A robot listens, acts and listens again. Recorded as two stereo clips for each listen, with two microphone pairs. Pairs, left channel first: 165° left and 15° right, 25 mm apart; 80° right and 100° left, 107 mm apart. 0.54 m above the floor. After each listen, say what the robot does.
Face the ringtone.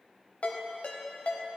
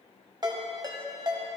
Turn 150° left.
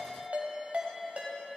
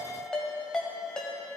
Facing the ringtone.